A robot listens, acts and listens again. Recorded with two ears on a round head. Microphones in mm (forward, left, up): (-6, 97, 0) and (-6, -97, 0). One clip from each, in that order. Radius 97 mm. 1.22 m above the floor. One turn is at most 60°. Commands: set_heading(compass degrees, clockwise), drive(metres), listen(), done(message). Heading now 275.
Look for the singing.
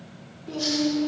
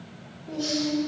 set_heading(215)
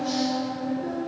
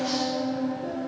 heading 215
set_heading(190)
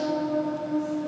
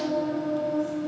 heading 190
set_heading(180)
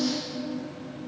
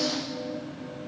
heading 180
done("Found it: singing, straight ahead.")